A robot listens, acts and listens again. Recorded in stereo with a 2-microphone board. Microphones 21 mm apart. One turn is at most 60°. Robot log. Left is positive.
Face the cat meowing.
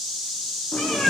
note: The cat meowing: about 70° left or 110° left.
cmd yaw +60
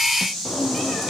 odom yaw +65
note: So it is at 10° left.
cmd yaw +10
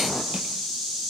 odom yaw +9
cmd idle
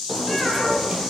end: Found it: a cat meowing, straight ahead.